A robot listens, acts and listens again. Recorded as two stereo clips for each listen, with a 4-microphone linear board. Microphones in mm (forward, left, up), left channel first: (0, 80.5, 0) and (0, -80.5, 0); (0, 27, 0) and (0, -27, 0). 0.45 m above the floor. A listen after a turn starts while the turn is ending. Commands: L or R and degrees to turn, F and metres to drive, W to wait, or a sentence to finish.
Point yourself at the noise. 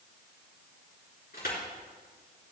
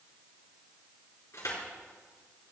L90
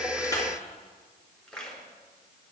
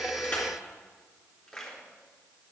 Found it: crushing, straight ahead.